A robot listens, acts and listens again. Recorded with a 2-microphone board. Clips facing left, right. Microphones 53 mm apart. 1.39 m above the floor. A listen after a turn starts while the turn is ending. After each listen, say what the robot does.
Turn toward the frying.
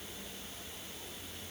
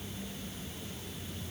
Keep listening.
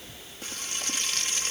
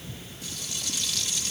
Turn 45° left.
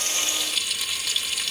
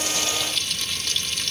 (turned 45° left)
Facing the frying.